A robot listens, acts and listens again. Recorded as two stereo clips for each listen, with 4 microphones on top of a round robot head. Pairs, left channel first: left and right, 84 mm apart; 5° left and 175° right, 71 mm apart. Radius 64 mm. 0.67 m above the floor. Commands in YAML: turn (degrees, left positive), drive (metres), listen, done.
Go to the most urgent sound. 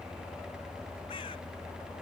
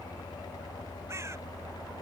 listen: true
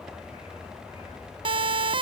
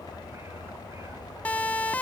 turn: -75
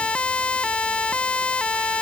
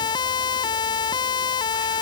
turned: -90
turn: 15
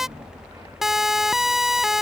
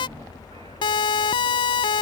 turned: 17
drive: 1.0
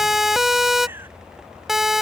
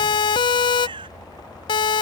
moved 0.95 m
drive: 1.0
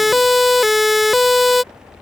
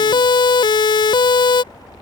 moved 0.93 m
drive: 1.0
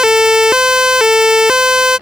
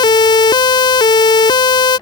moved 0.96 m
drive: 1.0
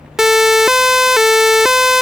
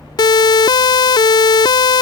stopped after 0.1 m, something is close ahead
done: "Arrived at the siren, straight ahead."